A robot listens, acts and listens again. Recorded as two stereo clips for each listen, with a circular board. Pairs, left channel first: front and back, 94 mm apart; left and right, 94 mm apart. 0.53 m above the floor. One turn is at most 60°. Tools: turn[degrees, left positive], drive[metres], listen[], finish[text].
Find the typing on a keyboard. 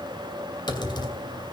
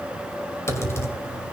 Thought: The typing on a keyboard: 30° left.
Action: turn[30]
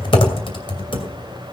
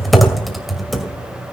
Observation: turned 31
Action: finish[Found it: typing on a keyboard, straight ahead.]